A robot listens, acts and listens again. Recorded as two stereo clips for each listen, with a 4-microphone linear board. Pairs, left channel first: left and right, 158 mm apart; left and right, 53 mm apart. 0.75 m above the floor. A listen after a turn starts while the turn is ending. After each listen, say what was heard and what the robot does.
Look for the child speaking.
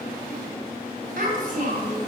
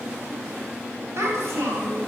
The child speaking: about 55° right or 125° right. Turn 55° right.
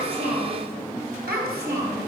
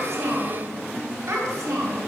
So it is at 85° right. Turn 85° right.
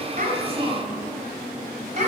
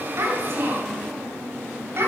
The child speaking is now 50° right. Turn 50° right.
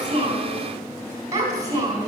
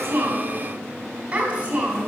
The child speaking is now 25° right. Turn 25° right.
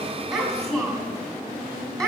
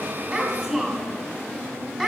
Found it: a child speaking, straight ahead.